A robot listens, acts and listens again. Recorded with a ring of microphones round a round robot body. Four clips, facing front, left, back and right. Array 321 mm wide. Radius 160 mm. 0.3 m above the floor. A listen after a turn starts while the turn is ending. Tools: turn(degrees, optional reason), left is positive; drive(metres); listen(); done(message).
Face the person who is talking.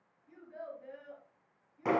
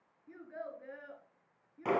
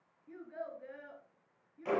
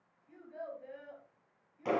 turn(degrees=115, reason="The child speaking: 115° left.")
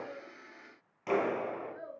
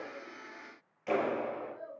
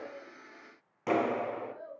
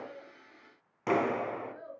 turn(degrees=-25, reason="The child speaking is now 25° right.")
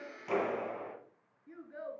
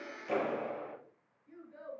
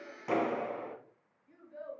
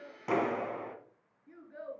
turn(degrees=-25, reason="The child speaking is now 25° right.")
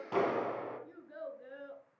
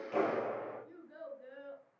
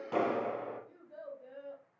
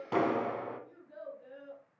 done("Found it: a child speaking, straight ahead, 2 to 4 m away.")